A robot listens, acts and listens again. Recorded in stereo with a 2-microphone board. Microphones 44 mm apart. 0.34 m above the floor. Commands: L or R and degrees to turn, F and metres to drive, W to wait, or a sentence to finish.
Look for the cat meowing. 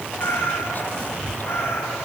L90
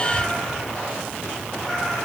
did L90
W
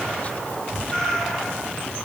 L15
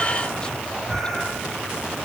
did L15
W
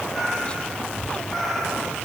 L10
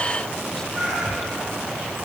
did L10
Facing the cat meowing.